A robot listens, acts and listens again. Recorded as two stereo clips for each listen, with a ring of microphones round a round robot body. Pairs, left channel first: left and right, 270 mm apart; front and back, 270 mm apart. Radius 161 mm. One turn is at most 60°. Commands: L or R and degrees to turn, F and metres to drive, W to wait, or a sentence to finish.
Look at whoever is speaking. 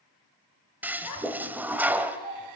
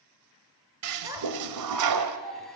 L60
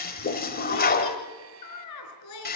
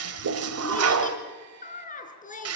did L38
L60
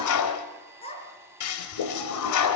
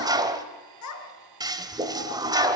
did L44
L20
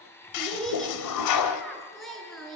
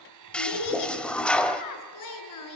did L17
Facing the child speaking.